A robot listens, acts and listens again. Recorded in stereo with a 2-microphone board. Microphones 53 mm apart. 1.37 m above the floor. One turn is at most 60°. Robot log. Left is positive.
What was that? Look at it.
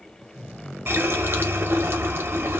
note: The running tap: about 50° right or 130° right.
cmd yaw -50
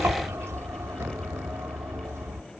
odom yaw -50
note: So it is at 75° right.
cmd yaw -60
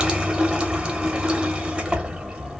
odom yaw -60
note: The running tap is now 20° right.
cmd yaw -20
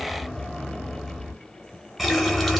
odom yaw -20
end: Facing the running tap, under 1 m away.